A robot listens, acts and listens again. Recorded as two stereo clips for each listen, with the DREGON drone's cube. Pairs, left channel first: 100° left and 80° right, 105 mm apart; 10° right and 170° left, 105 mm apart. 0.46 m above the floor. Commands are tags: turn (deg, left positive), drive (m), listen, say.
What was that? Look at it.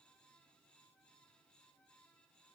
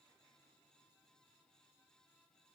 <listen/>
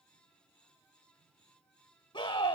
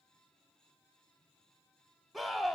<turn deg="75"/>
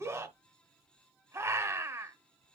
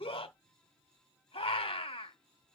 <turn deg="-20"/>
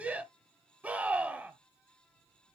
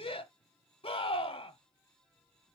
<say>Facing the scream.</say>